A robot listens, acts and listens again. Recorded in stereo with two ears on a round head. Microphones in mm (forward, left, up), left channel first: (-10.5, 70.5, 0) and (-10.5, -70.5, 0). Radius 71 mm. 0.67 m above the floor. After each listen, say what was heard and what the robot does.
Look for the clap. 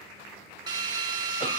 Keep listening.
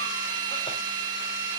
Keep listening.
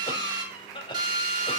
I can't make out a clap, only a cough and a drill.